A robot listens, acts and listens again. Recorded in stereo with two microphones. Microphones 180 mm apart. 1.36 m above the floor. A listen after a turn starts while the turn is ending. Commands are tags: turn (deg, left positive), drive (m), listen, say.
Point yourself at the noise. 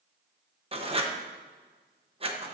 <turn deg="-30"/>
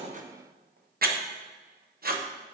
<turn deg="-115"/>
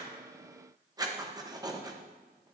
<turn deg="-25"/>
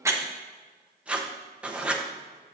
<say>Found it: writing, straight ahead.</say>